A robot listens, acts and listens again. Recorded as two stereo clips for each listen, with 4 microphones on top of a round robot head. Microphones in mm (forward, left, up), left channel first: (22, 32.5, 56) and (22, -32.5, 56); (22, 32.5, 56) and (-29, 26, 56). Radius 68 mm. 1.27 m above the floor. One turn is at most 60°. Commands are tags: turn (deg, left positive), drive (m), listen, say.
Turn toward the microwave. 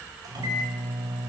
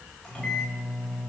<turn deg="-60"/>
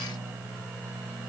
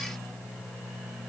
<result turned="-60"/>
<turn deg="-40"/>
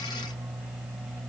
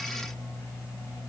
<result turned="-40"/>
<say>Found it: a microwave, straight ahead.</say>